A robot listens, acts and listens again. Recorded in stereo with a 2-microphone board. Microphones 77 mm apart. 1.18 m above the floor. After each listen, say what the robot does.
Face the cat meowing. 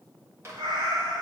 Turn 90° right.
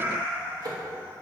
Turn 25° right.
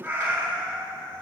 Turn 35° right.
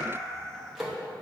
Facing the cat meowing.